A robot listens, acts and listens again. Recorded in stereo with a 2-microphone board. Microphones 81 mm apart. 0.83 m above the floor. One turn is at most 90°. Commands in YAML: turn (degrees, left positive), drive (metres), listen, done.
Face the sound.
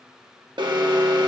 turn: -70
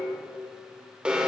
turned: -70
turn: -15
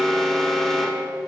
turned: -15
done: "Found it: an alarm, straight ahead, 1 to 2 m away."